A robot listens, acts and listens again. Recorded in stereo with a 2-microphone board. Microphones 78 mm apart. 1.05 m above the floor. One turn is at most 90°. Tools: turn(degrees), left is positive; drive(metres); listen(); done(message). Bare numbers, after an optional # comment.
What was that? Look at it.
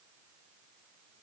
listen()
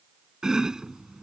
turn(-30)
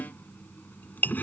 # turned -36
# So it is at 25° left.
turn(25)
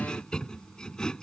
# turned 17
# The chopping is now 10° left.
turn(10)
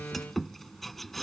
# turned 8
done("Found it: chopping, straight ahead.")